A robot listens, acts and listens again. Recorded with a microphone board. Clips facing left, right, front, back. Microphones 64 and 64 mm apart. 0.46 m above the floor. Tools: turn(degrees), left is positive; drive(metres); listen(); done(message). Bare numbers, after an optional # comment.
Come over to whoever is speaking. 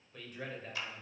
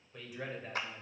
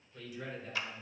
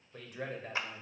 # The man speaking: 170° right.
turn(-170)
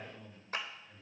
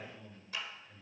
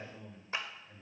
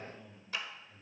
drive(1.0)
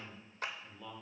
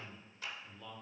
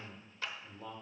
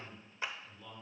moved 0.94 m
# The man speaking is now 10° left.
turn(10)
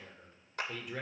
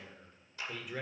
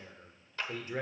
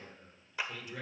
drive(1.0)
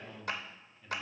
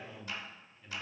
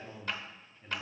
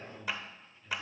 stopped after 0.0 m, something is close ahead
done("I am next to the man speaking.")